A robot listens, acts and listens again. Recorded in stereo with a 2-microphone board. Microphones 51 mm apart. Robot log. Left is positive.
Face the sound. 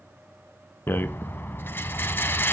note: The rattle: about 45° left or 135° left.
cmd yaw +45
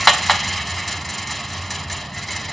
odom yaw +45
end: Found it: a rattle, straight ahead.